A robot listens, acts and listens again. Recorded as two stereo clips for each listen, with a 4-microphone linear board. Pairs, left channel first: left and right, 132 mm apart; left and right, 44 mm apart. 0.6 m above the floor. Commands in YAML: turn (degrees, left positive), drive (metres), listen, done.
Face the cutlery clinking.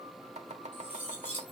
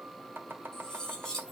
turn: 30
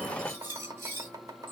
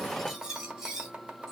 turn: -20
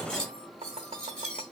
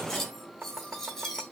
done: "Found it: cutlery clinking, straight ahead, 2 to 4 m away."